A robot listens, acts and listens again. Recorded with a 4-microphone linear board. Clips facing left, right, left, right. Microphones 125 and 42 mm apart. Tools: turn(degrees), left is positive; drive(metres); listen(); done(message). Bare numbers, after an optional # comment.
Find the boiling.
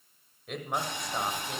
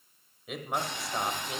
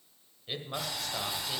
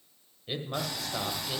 turn(30)
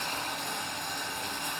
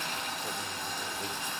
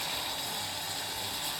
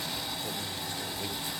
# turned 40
# So it is at 125° left.
turn(125)
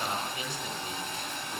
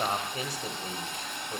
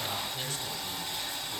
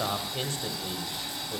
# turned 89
# The boiling is now 35° left.
turn(35)
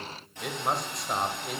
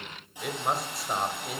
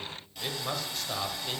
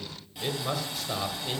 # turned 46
# The boiling is now 10° right.
turn(-10)
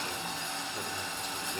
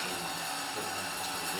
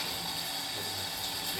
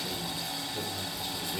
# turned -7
done("Found it: boiling, straight ahead, over 4 m away.")